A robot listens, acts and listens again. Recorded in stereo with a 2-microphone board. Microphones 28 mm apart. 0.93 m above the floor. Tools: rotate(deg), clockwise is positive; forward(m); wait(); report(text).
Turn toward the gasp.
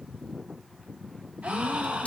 rotate(65)
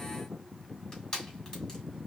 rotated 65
wait()
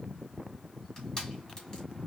report("I heard a gasp, but can't make it out now. It was about straight ahead or 50° right.")